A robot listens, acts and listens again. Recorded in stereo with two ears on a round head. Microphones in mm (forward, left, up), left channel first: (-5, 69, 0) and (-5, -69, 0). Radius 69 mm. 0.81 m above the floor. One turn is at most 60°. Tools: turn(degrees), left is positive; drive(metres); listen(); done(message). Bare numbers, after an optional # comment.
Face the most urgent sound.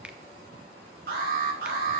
# The alarm: about 70° right or 110° right.
turn(-60)
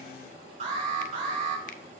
# So it is at 50° right.
turn(-50)
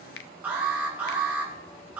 # The alarm is now 15° right.
turn(-15)
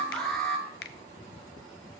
done("Facing the alarm, over 4 m away.")